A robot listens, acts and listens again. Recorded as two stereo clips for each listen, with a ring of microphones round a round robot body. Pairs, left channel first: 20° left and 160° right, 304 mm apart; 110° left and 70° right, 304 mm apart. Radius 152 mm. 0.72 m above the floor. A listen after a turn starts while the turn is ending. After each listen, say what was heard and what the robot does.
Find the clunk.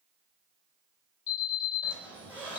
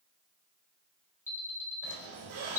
Keep listening.
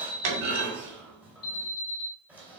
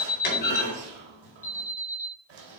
The clunk: 170° left. Turn 170° left.
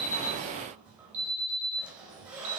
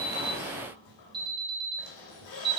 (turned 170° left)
I heard a clunk from this way, but can't make it out now.